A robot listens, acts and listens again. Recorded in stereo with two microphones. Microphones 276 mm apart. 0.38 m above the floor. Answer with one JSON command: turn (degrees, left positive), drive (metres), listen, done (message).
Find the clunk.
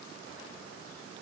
{"listen": true}
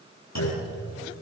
{"turn": 70}
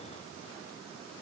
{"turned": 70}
{"listen": true}
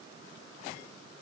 {"done": "I heard a clunk, but can't make it out now. It was about straight ahead or 40° left."}